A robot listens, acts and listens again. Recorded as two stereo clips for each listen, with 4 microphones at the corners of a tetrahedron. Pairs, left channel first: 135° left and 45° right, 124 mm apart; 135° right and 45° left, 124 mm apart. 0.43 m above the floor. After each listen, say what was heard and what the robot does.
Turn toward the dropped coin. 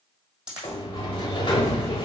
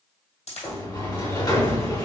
The dropped coin: 125° right. Turn 125° right.
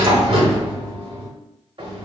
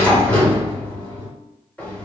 I heard a dropped coin from this way, but can't make it out now.